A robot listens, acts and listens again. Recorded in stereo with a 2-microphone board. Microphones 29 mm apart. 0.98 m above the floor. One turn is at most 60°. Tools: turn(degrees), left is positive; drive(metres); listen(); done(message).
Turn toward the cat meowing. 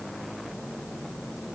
listen()
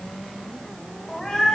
turn(degrees=15)
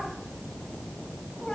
turn(degrees=20)
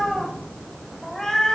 turn(degrees=15)
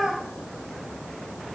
turn(degrees=30)
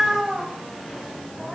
turn(degrees=-25)
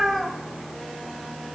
done("Facing the cat meowing, 2 to 4 m away.")